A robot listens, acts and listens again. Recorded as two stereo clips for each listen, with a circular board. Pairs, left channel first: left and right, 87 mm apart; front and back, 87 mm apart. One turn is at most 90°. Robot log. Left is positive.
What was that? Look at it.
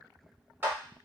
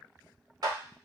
note: The clap: 150° right.
cmd yaw -90
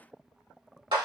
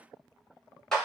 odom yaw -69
note: The clap is now 85° right.
cmd yaw -85
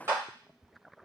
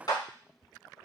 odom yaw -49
note: The clap is now 35° right.
cmd yaw -35
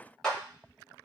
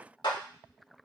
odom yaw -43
note: The clap is now 10° left.
cmd yaw +10
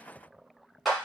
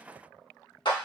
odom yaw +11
end: Facing the clap, 1 to 2 m away.